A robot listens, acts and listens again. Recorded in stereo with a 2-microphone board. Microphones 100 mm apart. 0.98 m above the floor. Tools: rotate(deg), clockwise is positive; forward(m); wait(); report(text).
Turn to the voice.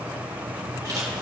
wait()
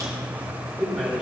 rotate(30)
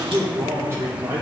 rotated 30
rotate(150)
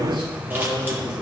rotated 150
rotate(60)
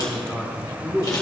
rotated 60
report("Facing the man speaking, 2 to 4 m away.")